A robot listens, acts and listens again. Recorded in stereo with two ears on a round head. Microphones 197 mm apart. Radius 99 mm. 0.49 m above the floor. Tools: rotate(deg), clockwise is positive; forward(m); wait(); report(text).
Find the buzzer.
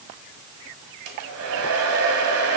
wait()
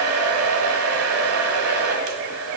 wait()
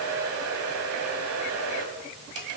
report("I can't make out a buzzer to turn to.")